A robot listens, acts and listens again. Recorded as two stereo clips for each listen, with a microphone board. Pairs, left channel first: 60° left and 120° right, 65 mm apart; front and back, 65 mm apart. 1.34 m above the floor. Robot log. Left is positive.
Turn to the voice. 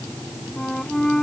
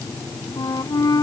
cmd idle
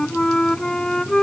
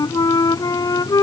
cmd idle
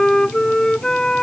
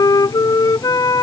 end: I can't make out anyone speaking to turn to.